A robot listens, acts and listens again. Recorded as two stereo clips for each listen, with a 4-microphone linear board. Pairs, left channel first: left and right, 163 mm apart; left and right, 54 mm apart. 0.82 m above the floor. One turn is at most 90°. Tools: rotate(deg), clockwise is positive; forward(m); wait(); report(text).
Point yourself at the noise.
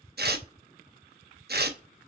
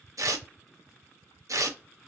rotate(70)
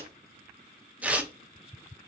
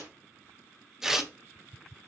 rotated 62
rotate(10)
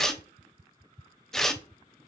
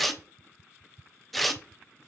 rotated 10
report("Found it: tearing paper, straight ahead.")